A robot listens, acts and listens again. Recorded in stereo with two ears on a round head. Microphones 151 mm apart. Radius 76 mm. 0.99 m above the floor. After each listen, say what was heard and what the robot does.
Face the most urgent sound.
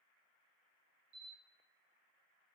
Keep listening.
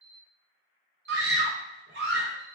The scream: about 70° right or 110° right. Turn 70° right.
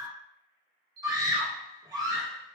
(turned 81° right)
So it is at 20° right. Turn 20° right.
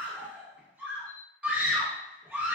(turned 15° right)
The scream is now 10° right. Turn 10° right.
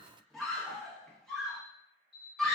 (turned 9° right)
Facing the scream.